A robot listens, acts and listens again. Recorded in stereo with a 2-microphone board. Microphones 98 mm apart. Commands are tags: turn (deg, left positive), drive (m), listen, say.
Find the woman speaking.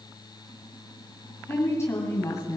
<turn deg="35"/>
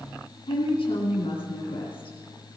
<turn deg="105"/>
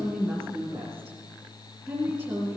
<turn deg="-10"/>
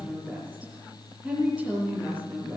<say>Facing the woman speaking, over 4 m away.</say>